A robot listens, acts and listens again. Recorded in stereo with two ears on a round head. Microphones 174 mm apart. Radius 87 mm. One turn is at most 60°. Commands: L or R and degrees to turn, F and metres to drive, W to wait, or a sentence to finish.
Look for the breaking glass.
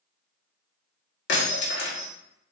L60
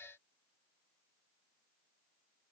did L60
W
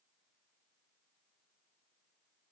I heard breaking glass, but can't make it out now. It was about 5° left or 55° left.